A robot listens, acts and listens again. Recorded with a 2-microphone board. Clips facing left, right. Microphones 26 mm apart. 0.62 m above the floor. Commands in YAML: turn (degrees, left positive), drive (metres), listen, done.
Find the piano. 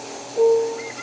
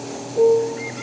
turn: 30
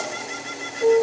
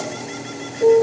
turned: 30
turn: -20
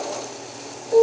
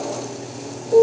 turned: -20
done: "Found it: a piano, straight ahead."